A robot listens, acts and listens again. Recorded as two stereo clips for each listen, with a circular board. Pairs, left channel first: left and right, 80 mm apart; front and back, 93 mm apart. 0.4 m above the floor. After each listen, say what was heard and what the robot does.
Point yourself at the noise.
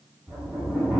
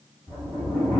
The sliding door: 10° right. Turn 10° right.
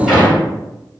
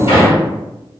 Found it: a sliding door, straight ahead, 1 to 2 m away.